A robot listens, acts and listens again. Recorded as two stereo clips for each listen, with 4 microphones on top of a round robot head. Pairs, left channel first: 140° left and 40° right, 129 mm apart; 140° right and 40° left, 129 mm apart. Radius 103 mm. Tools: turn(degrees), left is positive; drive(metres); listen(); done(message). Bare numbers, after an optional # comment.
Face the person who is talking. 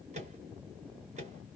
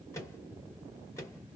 listen()
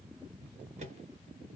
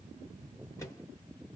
listen()
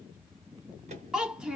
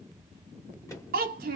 # The child speaking: 45° left.
turn(45)
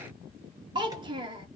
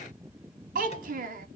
# The child speaking is now 20° left.
turn(20)
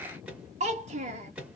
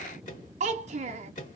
done("Facing the child speaking, under 1 m away.")